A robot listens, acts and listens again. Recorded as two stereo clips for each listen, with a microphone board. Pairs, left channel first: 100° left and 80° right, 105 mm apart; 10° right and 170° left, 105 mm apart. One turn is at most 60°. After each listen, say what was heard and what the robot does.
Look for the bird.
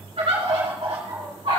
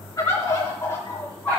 The bird: 75° right. Turn 60° right.
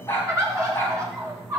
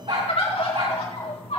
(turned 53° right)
The bird is now 20° right. Turn 20° right.
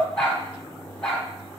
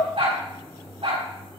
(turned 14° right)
Facing the bird, 2 to 4 m away.